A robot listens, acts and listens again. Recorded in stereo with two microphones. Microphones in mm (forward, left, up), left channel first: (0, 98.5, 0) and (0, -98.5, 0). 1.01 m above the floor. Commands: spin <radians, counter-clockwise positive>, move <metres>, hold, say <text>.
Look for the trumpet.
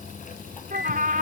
spin -0.79
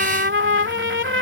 spin -1.57
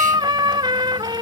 spin -0.44
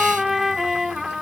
say Found it: a trumpet, straight ahead.